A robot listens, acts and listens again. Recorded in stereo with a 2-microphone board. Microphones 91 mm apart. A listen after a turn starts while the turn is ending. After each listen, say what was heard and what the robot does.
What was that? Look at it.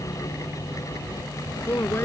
The man speaking: about 25° left or 155° left. Turn 25° left.
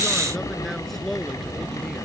Found it: a man speaking, straight ahead.